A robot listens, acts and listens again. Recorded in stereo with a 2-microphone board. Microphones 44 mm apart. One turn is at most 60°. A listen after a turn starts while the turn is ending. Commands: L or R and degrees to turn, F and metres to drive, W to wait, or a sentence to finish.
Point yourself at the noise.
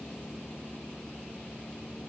W
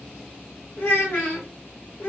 L55
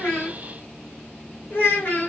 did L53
L60
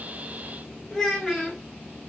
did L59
Facing the child speaking.